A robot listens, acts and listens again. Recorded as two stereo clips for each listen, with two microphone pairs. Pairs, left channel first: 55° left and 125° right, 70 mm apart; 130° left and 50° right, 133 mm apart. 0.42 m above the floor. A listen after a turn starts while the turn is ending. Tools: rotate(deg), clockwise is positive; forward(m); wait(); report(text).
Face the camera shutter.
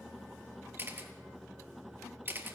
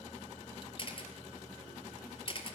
rotate(-180)
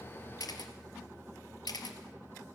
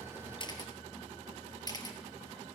rotate(-75)
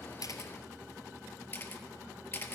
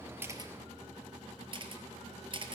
report("Facing the camera shutter, 1 to 2 m away.")